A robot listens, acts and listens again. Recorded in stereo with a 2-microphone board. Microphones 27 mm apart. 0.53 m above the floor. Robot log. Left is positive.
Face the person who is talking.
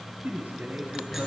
note: The man speaking: about 70° right or 110° right.
cmd yaw -70
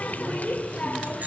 cmd idle
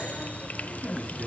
cmd idle
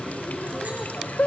end: I heard a man speaking, but can't make it out now. It was about straight ahead or 40° right.